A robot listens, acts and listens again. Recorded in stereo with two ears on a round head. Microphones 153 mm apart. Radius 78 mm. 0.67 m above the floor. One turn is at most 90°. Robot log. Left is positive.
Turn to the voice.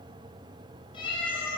cmd idle
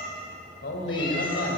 note: The man speaking: about 65° left or 115° left.
cmd yaw +65
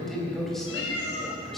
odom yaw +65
end: Found it: a man speaking, straight ahead.